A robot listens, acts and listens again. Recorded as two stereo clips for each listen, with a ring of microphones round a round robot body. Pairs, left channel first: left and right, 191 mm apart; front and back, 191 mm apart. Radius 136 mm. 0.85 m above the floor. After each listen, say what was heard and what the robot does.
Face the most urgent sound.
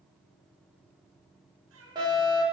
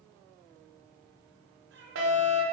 The fire alarm: 165° right. Turn 165° right.
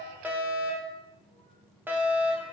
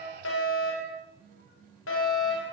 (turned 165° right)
The fire alarm is now 10° right. Turn 10° right.
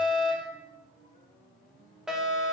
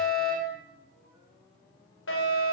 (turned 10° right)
Facing the fire alarm, over 4 m away.